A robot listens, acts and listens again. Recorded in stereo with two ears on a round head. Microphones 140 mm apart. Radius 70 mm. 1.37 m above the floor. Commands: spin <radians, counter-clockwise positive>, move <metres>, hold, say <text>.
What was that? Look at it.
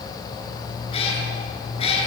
spin 0.70
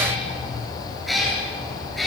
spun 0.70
say Found it: a cat meowing, straight ahead, over 4 m away.